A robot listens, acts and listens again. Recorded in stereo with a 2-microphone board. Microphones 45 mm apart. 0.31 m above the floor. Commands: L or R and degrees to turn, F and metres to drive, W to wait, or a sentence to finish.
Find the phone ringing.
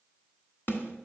W
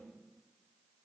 W
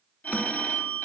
L45
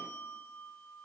L80
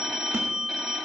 R20
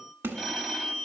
Found it: a phone ringing, straight ahead.